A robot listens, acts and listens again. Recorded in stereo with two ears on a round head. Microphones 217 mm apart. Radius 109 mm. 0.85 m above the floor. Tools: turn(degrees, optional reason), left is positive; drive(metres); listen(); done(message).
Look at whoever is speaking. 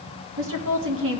turn(degrees=-55, reason="The woman speaking: about 55° right or 125° right.")
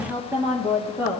turn(degrees=-15, reason="So it is at 15° right.")
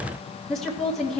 done("Facing the woman speaking.")